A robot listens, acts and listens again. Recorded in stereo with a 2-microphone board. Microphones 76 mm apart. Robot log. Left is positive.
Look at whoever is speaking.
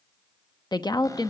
note: The woman speaking: about 65° left or 115° left.
cmd yaw +65
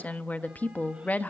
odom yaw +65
note: So it is at 25° left.
cmd yaw +25
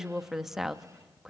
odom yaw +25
end: Found it: a woman speaking, straight ahead, under 1 m away.